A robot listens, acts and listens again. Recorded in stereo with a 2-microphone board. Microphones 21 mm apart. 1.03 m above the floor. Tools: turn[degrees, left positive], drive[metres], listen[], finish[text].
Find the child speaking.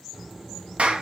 Thought: The child speaking: about 20° right or 160° right.
Action: turn[-20]
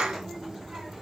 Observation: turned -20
Thought: So it is at 145° right.
Action: turn[-145]
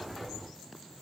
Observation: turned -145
Action: finish[Found it: a child speaking, straight ahead, 1 to 2 m away.]